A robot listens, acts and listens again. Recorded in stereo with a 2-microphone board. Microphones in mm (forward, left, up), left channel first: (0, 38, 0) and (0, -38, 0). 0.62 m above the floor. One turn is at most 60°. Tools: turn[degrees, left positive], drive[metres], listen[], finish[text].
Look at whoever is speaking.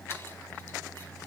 Action: listen[]
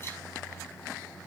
Action: listen[]
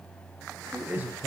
Thought: The man speaking: about 25° right or 155° right.
Action: turn[-25]
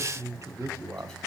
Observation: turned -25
Thought: So it is at 125° right.
Action: turn[-60]
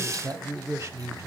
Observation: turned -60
Thought: The man speaking is now 45° right.
Action: turn[-45]
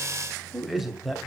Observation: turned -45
Action: finish[Facing the man speaking, 1 to 2 m away.]